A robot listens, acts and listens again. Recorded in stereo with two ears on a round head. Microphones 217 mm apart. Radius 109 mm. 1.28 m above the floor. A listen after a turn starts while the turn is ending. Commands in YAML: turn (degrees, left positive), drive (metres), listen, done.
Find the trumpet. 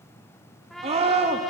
turn: 30
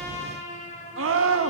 turn: 150
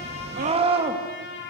turn: 50
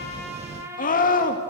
turn: -10
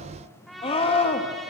done: "Found it: a trumpet, straight ahead, over 4 m away."